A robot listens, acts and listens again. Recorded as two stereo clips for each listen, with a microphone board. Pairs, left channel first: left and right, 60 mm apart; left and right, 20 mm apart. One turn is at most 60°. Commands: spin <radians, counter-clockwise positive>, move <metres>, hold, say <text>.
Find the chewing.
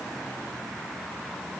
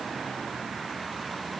hold
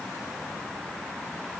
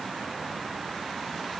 hold
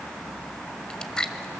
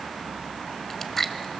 spin 0.52
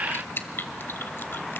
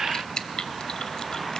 spin 1.05
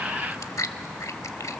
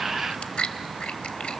spin 1.05
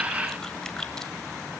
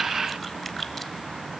spin 0.61
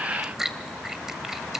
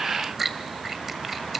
say Found it: chewing, straight ahead, under 1 m away.